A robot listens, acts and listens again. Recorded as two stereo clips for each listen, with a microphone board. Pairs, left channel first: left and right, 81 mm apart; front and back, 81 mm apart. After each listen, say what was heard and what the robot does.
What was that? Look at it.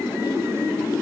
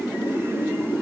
Keep listening.
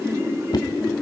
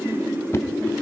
The knocking: 60° left. Turn 60° left.
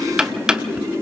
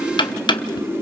The knocking is now 10° right. Turn 10° right.
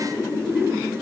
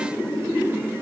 Keep listening.
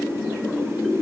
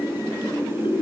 Keep listening.
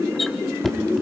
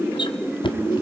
Facing the knocking.